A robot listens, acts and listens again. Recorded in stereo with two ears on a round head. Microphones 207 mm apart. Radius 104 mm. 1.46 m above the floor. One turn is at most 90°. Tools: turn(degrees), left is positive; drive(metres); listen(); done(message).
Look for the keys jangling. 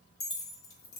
turn(degrees=65)
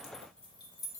turn(degrees=15)
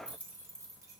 turn(degrees=-15)
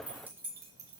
turn(degrees=-15)
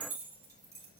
turn(degrees=-15)
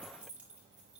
done("Found it: keys jangling, straight ahead.")